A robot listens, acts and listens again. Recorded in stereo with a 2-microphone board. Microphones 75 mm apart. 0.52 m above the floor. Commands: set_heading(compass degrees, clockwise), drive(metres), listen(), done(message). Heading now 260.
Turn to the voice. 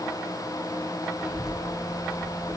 set_heading(290)
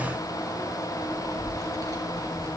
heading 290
set_heading(60)
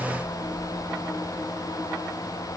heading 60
done("Found it: a child speaking, straight ahead, over 4 m away.")